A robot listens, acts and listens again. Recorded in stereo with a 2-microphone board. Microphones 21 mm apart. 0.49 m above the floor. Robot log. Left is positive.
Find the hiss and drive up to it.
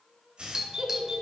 note: The hiss: about 60° right or 120° right.
cmd yaw -60
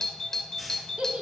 cmd idle
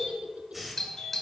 cmd fwd 1.0
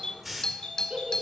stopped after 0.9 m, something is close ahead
end: Arrived at the hiss, straight ahead.